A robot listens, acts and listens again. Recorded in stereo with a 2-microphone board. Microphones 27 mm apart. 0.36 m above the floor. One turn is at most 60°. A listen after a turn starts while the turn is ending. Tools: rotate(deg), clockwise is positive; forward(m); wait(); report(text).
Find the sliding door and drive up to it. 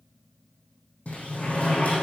rotate(-60)
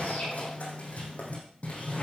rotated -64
rotate(-55)
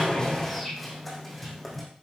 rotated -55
forward(1.0)
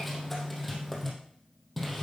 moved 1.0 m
forward(1.0)
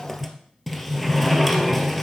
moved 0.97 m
forward(1.0)
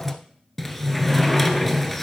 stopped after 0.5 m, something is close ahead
report("Arrived at the sliding door, straight ahead.")